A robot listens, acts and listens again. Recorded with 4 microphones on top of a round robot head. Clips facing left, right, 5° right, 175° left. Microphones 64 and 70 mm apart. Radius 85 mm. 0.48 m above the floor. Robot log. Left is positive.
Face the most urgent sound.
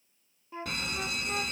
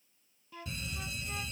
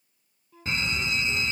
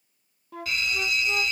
note: The fire alarm: 60° left.
cmd yaw +60
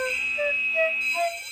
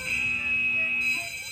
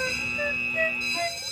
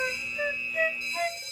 end: Found it: a fire alarm, straight ahead.